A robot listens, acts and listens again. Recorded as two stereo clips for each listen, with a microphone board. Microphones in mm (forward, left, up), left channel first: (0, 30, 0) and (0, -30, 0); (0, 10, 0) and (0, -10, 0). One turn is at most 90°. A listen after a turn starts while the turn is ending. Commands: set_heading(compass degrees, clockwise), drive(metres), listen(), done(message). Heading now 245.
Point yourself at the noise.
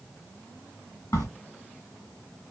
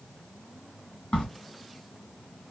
set_heading(180)
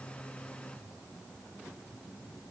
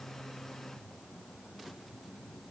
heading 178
listen()
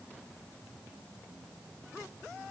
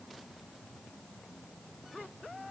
done("I heard a crack, but can't make it out now. It was about straight ahead or 45° left.")